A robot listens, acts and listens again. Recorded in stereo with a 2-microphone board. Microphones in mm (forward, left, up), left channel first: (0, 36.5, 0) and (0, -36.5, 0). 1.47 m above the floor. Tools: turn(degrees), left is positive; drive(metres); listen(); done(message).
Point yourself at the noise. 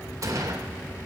turn(degrees=-45)
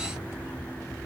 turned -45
listen()
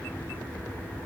done("I heard a gunshot, but can't make it out now. It was about straight ahead or 90° right.")